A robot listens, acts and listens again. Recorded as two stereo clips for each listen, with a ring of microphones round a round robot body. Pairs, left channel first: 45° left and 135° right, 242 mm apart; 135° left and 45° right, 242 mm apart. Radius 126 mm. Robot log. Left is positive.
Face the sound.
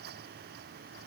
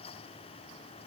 cmd idle
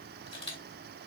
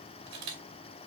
note: The camera shutter: 20° right.
cmd yaw -20
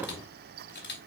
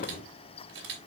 end: Found it: a camera shutter, straight ahead.